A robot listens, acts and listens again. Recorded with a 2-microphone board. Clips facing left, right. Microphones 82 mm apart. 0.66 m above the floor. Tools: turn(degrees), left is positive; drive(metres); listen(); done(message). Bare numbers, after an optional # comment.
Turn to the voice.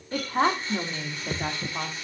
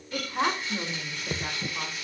# The woman speaking: about 55° left or 125° left.
turn(55)
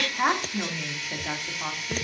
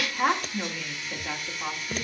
# So it is at 15° left.
turn(15)
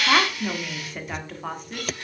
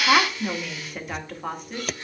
done("Facing the woman speaking, 1 to 2 m away.")